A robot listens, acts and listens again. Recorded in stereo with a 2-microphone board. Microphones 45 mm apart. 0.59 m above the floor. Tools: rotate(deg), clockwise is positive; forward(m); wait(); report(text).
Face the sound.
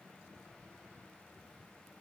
wait()
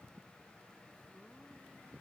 wait()
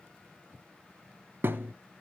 rotate(55)
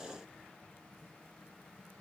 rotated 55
wait()
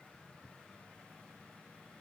report("I heard a thud, but can't make it out now. It was about straight ahead or 70° right.")